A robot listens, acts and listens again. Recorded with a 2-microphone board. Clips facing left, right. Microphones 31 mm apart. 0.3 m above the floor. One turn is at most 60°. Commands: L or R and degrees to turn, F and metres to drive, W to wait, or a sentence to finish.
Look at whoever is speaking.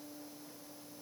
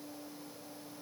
W
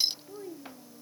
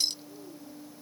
L45
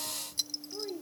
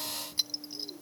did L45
L60
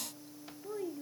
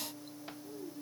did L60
L55
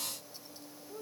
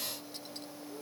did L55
L20
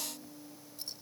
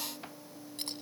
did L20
W
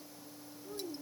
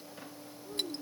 W
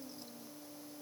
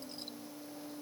Facing where the child speaking came from. I can't hear it now.